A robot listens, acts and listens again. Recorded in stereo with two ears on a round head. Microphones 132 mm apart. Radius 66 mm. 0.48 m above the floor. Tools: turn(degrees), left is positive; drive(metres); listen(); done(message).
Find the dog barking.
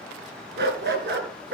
turn(degrees=-90)
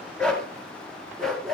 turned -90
done("Found it: a dog barking, straight ahead, 2 to 4 m away.")